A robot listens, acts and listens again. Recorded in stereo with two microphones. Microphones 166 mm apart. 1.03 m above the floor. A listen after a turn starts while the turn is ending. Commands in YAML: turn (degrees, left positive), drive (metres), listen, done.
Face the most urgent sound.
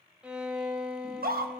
turn: -70
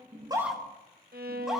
done: "Found it: a scream, straight ahead, 1 to 2 m away."